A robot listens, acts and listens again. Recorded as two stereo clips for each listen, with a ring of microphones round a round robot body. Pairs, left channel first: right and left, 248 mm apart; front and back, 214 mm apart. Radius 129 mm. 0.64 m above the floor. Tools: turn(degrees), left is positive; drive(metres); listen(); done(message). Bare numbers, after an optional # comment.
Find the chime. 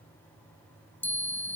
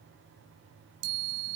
# The chime: 175° right.
turn(-175)
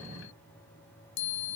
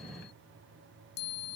# The chime is now 50° right.
turn(-50)
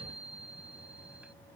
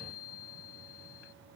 done("Found it: a chime, straight ahead.")